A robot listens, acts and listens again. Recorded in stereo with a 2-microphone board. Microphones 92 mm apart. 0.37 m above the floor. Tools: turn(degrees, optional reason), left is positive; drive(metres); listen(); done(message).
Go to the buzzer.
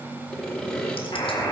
turn(degrees=40, reason="The buzzer: about 40° left or 140° left.")
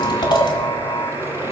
turn(degrees=100, reason="So it is at 100° left.")
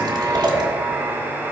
turn(degrees=-10, reason="The buzzer is now 10° right.")
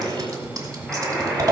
drive(metres=1.0)
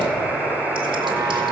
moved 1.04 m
drive(metres=1.0)
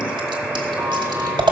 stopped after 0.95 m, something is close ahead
done("I am next to the buzzer.")